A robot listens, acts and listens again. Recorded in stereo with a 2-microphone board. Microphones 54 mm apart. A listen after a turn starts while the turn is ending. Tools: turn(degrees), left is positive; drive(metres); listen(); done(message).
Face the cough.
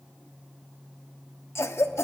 turn(degrees=55)
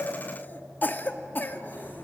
turn(degrees=45)
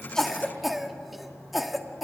done("Found it: a cough, straight ahead, 1 to 2 m away.")